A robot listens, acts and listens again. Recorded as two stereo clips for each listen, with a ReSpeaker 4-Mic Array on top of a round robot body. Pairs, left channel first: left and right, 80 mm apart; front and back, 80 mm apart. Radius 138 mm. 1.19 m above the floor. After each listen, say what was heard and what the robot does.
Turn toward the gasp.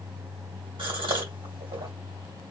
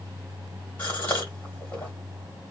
The gasp: 65° right. Turn 65° right.
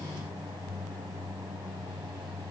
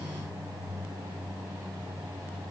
I heard a gasp from this way, but can't make it out now.